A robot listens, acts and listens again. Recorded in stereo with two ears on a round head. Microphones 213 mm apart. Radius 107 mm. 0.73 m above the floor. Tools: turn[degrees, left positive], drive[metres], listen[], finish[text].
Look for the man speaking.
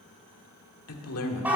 Thought: The man speaking: about 70° left or 110° left.
Action: turn[70]
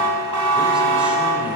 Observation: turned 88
Action: listen[]
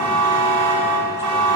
Action: listen[]
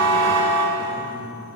Thought: So it is at 15° right.
Action: turn[-15]
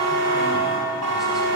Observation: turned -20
Action: listen[]
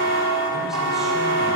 Action: listen[]
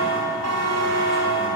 Action: finish[I heard a man speaking from this way, but can't make it out now.]